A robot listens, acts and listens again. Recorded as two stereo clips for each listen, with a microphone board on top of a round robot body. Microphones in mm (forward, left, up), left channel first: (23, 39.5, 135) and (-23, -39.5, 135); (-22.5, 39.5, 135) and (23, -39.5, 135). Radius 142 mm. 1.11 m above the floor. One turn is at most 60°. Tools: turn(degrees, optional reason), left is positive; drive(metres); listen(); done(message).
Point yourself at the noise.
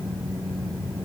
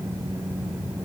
listen()
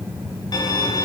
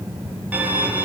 turn(degrees=15, reason="The violin: 15° left.")
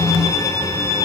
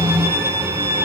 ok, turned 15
done("Found it: a violin, straight ahead.")